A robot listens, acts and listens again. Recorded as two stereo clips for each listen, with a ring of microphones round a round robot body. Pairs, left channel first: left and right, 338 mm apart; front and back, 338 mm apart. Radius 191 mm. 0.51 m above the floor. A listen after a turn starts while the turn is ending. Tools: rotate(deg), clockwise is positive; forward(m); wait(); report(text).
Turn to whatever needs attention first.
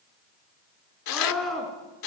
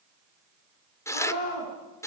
report("Found it: a scream, straight ahead, over 4 m away.")